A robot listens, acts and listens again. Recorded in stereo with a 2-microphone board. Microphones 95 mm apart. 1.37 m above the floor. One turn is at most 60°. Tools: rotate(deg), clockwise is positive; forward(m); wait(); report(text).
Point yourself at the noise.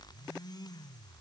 wait()
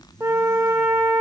rotate(25)
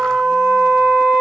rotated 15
rotate(10)
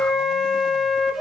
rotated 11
report("Facing the flute.")